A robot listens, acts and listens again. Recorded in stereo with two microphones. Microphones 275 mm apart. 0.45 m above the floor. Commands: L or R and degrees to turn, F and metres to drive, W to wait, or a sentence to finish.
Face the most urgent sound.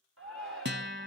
R50
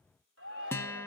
R70
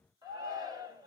R15
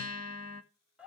Found it: a shout, straight ahead.